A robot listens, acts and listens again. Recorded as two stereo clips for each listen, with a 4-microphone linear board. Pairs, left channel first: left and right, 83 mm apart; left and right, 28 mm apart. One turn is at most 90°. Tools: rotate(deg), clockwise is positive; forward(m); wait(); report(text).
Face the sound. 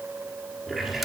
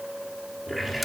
rotate(-30)
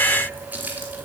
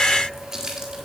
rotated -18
rotate(20)
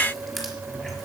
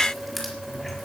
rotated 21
report("Facing the running tap.")